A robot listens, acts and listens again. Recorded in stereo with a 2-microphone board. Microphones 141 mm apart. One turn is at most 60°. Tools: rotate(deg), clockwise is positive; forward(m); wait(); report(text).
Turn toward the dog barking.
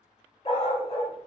rotate(-45)
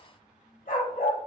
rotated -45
rotate(-60)
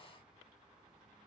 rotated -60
rotate(-30)
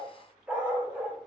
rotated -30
rotate(10)
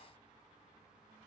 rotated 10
wait()
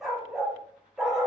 report("Found it: a dog barking, straight ahead, under 1 m away.")